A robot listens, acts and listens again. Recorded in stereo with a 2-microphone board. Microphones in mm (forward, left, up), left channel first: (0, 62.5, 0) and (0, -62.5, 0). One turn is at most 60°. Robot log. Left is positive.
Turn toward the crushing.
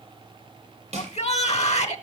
note: The crushing: about 55° right or 125° right.
cmd yaw -55
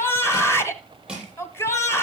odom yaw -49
end: Facing the crushing, over 4 m away.